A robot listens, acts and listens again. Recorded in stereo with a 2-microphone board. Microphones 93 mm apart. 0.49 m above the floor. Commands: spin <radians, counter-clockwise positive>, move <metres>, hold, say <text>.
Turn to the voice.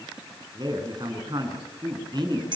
spin -0.96
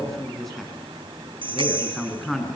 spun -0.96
say Found it: a man speaking, straight ahead, over 4 m away.